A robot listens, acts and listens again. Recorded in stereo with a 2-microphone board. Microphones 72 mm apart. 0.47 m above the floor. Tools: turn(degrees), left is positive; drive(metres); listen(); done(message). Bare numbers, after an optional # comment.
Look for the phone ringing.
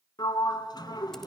listen()
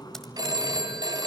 # The phone ringing: about 70° right or 110° right.
turn(-70)
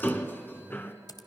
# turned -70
listen()
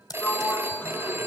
# So it is at 35° right.
turn(-35)
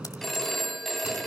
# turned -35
done("Facing the phone ringing.")